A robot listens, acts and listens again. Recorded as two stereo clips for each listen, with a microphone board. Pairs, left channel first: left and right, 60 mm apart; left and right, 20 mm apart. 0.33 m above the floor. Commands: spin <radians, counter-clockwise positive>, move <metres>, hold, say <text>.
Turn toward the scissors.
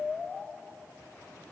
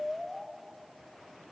hold
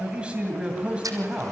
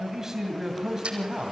spin -1.57
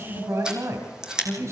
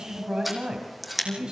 spin -0.26
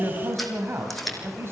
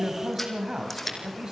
say Found it: scissors, straight ahead.